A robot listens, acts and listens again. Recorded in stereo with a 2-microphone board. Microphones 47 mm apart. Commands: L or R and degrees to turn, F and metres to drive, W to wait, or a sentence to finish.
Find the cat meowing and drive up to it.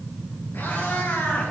L60
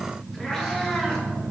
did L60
L15
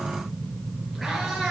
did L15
F1.0
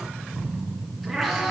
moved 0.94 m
F1.0
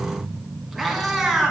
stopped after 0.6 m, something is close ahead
I am next to the cat meowing.